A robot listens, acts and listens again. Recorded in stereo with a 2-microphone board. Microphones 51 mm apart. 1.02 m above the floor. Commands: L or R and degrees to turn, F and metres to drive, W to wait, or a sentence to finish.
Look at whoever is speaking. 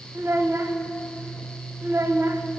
R90
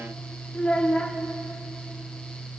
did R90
L15
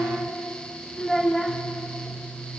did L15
Facing the child speaking, 1 to 2 m away.